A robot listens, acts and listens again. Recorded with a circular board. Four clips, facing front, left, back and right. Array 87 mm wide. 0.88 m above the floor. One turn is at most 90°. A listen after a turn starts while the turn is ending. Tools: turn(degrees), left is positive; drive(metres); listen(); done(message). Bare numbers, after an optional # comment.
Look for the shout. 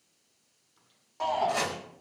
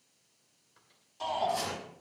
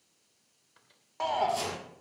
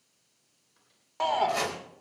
# The shout: 110° right.
turn(-90)
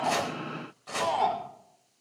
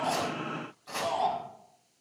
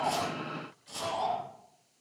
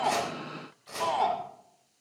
# The shout is now 45° right.
turn(-45)
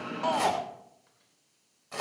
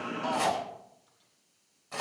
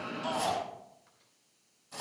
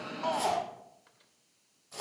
# The shout is now 10° right.
turn(-10)
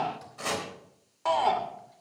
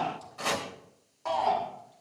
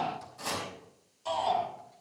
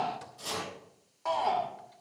done("Facing the shout.")